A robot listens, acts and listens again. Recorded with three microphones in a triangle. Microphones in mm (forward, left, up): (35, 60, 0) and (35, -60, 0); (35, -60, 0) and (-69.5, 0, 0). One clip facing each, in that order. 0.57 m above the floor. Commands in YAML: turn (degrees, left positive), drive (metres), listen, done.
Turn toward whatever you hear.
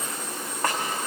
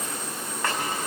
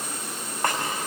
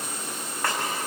turn: 40
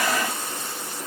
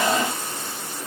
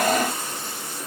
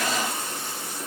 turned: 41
listen: true
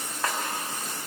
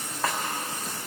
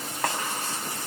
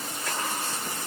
done: "Facing the snare drum."